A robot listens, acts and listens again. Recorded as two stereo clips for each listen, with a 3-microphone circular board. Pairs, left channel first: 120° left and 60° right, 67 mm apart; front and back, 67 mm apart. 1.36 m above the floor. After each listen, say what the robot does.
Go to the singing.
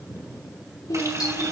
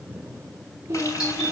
Turn 135° left.
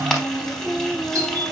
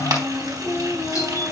Drive 1.0 m forward.
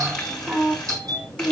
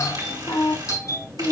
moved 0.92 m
Drive 1.0 m forward.
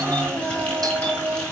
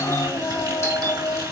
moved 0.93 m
Drive 1.0 m forward.
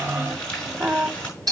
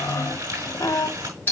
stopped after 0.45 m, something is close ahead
I am next to the singing.